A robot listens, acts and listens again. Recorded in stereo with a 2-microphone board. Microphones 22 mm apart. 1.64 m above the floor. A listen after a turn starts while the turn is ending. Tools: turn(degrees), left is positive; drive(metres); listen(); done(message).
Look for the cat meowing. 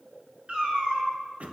turn(degrees=-45)
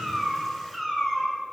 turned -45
done("Found it: a cat meowing, straight ahead, 2 to 4 m away.")